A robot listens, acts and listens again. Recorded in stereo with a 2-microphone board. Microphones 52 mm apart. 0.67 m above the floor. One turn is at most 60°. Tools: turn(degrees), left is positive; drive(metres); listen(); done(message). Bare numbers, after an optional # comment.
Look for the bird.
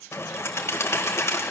# The bird: about 60° left or 120° left.
turn(60)
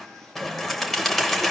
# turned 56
done("Facing the bird.")